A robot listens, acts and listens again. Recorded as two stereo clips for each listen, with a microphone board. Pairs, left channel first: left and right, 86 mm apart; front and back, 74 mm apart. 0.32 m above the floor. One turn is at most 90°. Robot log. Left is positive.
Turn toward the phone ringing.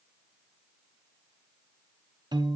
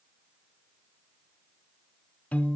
cmd idle
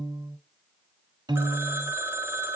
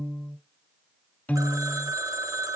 note: The phone ringing: 150° right.
cmd yaw -90
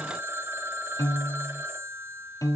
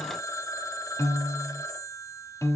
note: The phone ringing is now 35° right.
cmd yaw -35
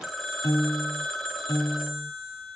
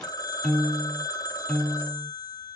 end: Facing the phone ringing.